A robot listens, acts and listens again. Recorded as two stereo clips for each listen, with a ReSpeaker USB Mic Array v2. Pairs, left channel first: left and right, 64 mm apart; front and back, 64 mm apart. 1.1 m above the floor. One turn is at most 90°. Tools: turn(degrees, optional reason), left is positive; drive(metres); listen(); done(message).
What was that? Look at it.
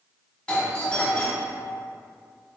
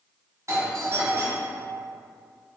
turn(degrees=90, reason="The doorbell: 160° left.")
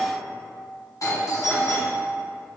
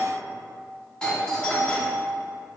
turn(degrees=75, reason="The doorbell is now 75° left.")
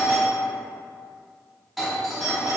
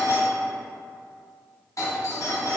done("Facing the doorbell, 1 to 2 m away.")